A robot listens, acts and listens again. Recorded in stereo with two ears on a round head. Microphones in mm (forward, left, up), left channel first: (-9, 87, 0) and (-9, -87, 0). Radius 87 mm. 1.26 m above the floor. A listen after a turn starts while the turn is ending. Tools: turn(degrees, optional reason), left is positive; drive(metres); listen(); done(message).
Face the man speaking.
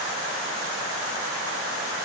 listen()
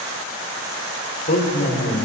turn(degrees=45, reason="The man speaking: about 45° left or 135° left.")
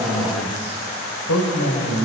turn(degrees=90, reason="So it is at 90° left.")
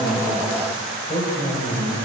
turn(degrees=30, reason="The man speaking is now 30° left.")
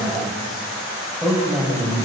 done("Facing the man speaking, over 4 m away.")